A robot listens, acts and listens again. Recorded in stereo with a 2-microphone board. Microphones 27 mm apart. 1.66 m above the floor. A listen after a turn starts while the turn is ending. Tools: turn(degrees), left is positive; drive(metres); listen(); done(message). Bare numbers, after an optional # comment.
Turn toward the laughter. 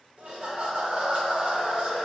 # The laughter: about 50° right or 130° right.
turn(-50)
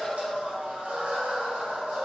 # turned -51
# So it is at 75° right.
turn(-75)
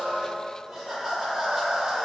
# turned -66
# The laughter is now 10° right.
turn(-10)
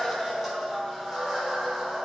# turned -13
done("Facing the laughter.")